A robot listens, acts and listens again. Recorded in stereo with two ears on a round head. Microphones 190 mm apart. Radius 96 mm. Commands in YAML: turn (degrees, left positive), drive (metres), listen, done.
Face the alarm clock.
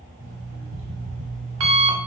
turn: -75
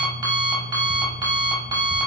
turn: -20
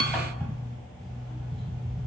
done: "Facing the alarm clock."